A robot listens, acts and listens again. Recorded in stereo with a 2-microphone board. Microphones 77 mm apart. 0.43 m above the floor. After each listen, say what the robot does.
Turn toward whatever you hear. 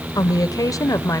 Turn 50° left.
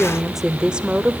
Turn 20° right.
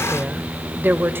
Turn 30° right.
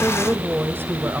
Turn 30° right.
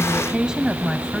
Turn 10° right.
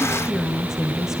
Facing the woman speaking.